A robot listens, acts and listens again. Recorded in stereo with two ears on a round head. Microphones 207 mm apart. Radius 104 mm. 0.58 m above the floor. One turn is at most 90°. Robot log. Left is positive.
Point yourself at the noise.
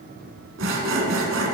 note: The sawing: about 60° right or 120° right.
cmd yaw -60
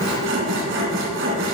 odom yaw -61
note: So it is at 55° right.
cmd yaw -55
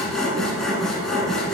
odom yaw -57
end: Found it: sawing, straight ahead, 1 to 2 m away.